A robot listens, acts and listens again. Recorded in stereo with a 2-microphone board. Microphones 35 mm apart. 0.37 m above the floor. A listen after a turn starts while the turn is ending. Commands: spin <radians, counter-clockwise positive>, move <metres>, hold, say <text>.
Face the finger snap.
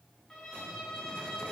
hold
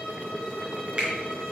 spin -0.61
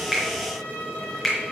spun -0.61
say Facing the finger snap.